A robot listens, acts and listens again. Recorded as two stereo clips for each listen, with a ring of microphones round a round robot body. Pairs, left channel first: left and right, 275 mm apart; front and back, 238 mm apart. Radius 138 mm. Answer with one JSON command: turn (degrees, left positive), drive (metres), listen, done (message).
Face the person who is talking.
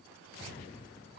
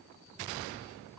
{"listen": true}
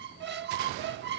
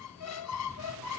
{"listen": true}
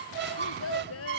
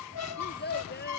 {"turn": 45}
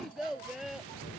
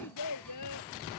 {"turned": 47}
{"done": "Facing the child speaking."}